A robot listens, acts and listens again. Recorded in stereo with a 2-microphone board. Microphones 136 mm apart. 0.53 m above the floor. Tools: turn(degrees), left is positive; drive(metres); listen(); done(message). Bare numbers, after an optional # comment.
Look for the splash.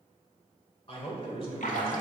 turn(90)
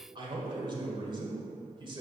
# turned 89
done("I heard a splash from this way, but can't make it out now.")